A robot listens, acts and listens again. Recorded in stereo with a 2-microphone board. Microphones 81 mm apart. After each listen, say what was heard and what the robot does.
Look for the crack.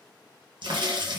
The crack: about 70° right or 110° right. Turn 70° right.
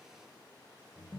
Keep listening.
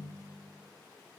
I heard a crack, but can't make it out now. It was about straight ahead or 40° right.